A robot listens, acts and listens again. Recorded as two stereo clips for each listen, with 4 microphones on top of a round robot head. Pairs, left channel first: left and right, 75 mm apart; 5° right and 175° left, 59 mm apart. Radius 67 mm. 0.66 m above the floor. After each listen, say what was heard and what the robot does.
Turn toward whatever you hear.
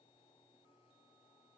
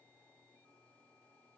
Keep listening.
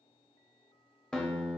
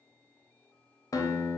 The guitar: 10° left. Turn 10° left.
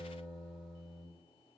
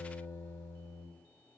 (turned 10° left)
Facing the guitar.